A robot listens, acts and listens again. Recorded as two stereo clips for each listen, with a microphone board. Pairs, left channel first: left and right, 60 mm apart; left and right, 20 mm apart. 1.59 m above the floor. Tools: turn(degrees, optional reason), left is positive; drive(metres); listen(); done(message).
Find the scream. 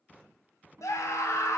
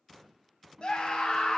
turn(degrees=55, reason="The scream: about 55° left or 125° left.")
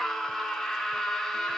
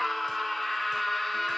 done("Found it: a scream, straight ahead, 1 to 2 m away.")